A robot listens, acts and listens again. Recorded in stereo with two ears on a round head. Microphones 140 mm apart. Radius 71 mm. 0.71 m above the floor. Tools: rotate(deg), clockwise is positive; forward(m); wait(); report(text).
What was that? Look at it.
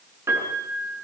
rotate(15)
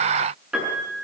report("Facing the piano.")